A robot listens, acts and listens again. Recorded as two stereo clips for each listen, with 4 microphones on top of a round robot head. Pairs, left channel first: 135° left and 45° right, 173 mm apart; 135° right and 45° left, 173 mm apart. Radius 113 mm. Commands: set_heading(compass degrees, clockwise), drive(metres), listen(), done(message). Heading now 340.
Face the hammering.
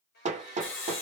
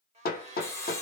set_heading(75)
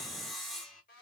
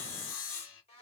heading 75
listen()
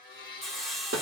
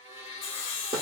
set_heading(100)
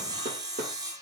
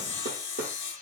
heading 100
done("Found it: hammering, straight ahead.")